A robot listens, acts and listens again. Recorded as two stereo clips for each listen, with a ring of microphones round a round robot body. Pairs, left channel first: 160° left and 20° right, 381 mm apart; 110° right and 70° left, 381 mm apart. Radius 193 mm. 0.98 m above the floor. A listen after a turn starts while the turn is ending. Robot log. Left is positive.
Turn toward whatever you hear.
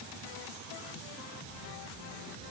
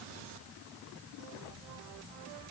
cmd idle
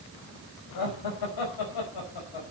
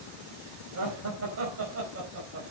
note: The laughter: 125° left.
cmd yaw +125
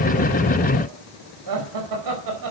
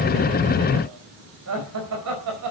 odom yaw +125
note: The laughter is now 20° left.
cmd yaw +20
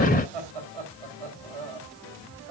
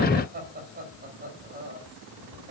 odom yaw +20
end: Found it: laughter, straight ahead, over 4 m away.